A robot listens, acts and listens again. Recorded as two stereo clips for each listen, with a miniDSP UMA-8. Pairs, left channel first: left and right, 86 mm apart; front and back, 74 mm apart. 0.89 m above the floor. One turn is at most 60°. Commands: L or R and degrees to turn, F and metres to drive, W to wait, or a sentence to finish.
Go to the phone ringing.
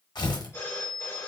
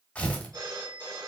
L60
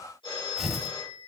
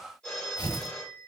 L60
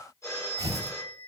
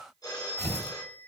L35
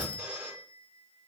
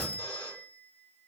R15
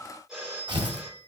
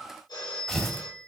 F1.0
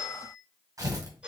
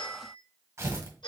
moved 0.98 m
R15
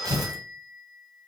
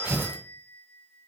F1.0
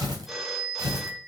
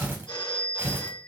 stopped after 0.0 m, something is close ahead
I am next to the phone ringing.